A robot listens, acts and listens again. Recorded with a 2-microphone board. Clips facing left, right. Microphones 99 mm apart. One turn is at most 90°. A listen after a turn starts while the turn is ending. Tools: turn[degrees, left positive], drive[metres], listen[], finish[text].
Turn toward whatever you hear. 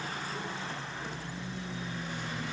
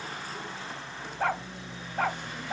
Thought: The dog barking: about 70° right or 110° right.
Action: turn[-70]
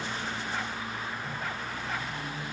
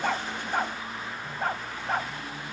Thought: So it is at 40° right.
Action: turn[-40]
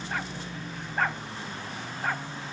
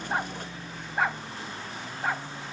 Thought: The dog barking is now 10° right.
Action: turn[-10]
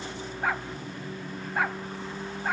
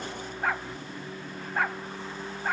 Action: finish[Facing the dog barking.]